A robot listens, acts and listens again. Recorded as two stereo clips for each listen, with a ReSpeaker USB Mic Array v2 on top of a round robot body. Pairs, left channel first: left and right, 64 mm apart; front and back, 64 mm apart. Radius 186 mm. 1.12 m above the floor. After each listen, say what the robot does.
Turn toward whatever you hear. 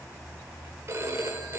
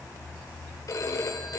Turn 40° right.
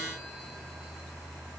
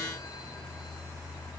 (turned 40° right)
Keep listening.
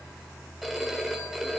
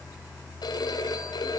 Found it: a phone ringing, straight ahead, 2 to 4 m away.